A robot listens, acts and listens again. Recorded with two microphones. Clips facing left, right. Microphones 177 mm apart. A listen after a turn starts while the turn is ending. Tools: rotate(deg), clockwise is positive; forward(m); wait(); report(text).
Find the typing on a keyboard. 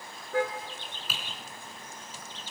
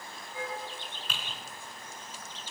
rotate(-30)
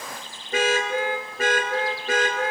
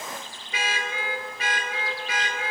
wait()
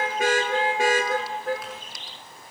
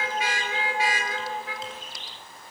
wait()
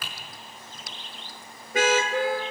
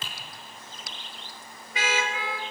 rotate(25)
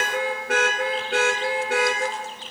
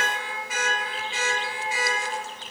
wait()
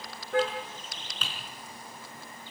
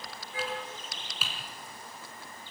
report("Found it: typing on a keyboard, straight ahead, over 4 m away.")